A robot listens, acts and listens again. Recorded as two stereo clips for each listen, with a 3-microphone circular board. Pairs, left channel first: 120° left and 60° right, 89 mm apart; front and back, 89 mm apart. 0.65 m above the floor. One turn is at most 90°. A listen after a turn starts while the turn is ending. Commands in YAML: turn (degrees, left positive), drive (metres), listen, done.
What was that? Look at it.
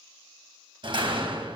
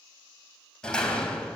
turn: -80
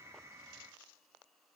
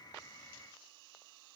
done: "I heard a door slam from this way, but can't make it out now."